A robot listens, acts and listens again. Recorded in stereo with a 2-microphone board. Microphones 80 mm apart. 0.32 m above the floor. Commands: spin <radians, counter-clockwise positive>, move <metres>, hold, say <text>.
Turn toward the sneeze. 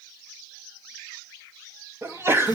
spin -0.52
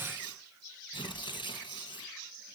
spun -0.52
hold
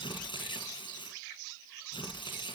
say I heard a sneeze, but can't make it out now. It was about straight ahead or 120° right.